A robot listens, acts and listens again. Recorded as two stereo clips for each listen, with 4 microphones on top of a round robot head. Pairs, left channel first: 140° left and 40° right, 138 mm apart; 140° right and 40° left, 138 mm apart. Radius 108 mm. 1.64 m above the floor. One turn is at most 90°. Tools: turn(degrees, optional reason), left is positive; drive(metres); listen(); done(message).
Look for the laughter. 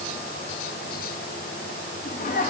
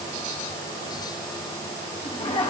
turn(degrees=90, reason="The laughter: 175° left.")
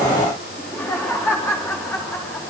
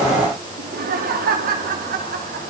turn(degrees=65, reason="The laughter is now 65° left.")
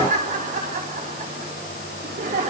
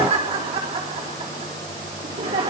done("Found it: laughter, straight ahead, over 4 m away.")